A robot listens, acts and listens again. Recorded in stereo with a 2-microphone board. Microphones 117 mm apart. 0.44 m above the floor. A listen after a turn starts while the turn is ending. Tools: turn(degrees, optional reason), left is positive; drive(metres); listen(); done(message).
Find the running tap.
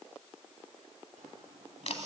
turn(degrees=-90)
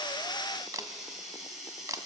done("Facing the running tap.")